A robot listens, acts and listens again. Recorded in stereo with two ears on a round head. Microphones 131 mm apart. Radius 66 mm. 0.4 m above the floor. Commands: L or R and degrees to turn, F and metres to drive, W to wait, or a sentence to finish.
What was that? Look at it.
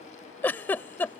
L30
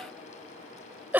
R15
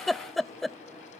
Facing the giggle.